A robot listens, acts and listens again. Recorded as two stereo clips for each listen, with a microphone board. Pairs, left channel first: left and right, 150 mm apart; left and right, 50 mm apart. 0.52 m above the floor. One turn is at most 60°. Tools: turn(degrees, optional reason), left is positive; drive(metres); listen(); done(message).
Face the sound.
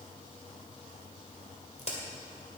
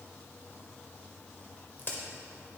turn(degrees=45, reason="The crack: about 45° left or 135° left.")
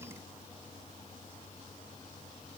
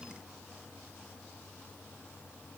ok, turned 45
listen()
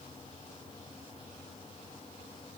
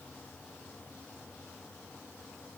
done("I heard a crack, but can't make it out now. It was about straight ahead or 90° left.")